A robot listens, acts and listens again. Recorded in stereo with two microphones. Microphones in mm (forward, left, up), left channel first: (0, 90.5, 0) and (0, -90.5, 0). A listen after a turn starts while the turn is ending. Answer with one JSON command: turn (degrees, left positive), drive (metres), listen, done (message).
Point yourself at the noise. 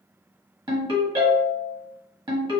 {"turn": -25}
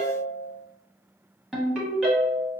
{"done": "Facing the ringtone, 1 to 2 m away."}